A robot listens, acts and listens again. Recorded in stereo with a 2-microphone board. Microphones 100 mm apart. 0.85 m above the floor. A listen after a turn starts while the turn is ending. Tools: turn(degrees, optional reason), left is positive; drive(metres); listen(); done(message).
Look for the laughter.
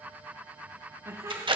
turn(degrees=-30, reason="The laughter: about 30° right or 150° right.")
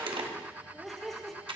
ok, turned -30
done("Found it: laughter, straight ahead.")